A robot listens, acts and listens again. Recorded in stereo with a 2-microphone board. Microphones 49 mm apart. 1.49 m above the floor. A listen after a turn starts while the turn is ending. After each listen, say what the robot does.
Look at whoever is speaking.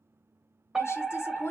Turn 65° left.
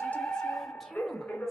Keep listening.
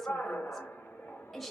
Found it: a woman speaking, straight ahead.